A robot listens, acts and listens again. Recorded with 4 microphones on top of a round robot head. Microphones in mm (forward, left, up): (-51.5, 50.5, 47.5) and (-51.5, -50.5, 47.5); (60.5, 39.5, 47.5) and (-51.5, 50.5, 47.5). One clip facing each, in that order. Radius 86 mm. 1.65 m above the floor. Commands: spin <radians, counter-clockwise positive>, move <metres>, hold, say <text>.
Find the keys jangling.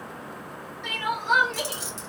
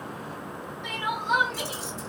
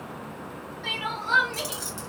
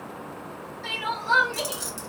spin 1.75
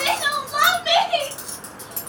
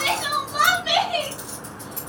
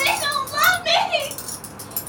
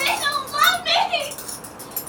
spin 1.05
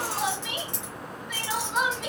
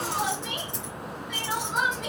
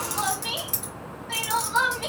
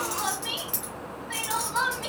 spin 0.87
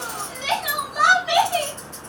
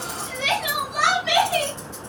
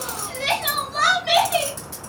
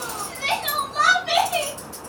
spin -0.17
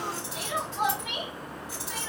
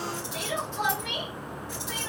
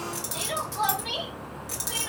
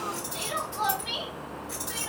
say Facing the keys jangling.